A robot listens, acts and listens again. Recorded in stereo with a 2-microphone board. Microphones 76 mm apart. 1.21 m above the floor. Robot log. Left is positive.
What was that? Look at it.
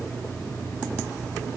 cmd idle
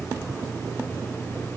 cmd idle
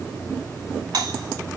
note: The doorbell: about 70° right or 110° right.
cmd yaw -70
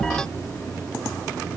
cmd idle
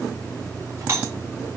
note: So it is at 35° right.
cmd yaw -35
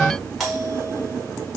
end: Facing the doorbell, over 4 m away.